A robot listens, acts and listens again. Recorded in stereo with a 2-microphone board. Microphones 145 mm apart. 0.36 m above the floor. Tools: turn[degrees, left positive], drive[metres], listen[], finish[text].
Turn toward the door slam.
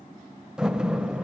Action: turn[-30]
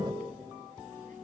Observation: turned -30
Action: listen[]
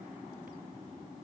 Action: finish[I heard a door slam, but can't make it out now. It was about 25° left or 145° right.]